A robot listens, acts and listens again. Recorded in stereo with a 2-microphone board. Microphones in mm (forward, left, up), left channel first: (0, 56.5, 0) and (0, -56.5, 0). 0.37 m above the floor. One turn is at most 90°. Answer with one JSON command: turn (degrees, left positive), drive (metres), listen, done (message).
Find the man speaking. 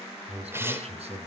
{"turn": -65}
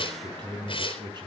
{"turn": -45}
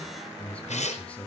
{"turn": 10}
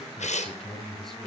{"done": "Facing the man speaking."}